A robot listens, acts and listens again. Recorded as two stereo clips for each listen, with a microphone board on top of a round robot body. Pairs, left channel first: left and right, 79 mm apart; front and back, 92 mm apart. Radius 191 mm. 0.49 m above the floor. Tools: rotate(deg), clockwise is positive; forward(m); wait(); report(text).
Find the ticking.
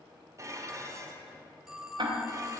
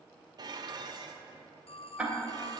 rotate(105)
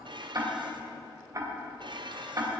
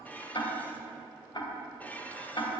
rotate(40)
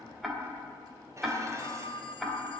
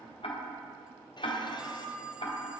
report("Found it: ticking, straight ahead, 2 to 4 m away.")